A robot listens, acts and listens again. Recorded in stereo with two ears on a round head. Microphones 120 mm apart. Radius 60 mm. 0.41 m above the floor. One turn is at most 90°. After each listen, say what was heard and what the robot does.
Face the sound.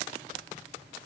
Keep listening.
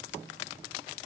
Keep listening.
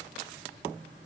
I can't make out anything.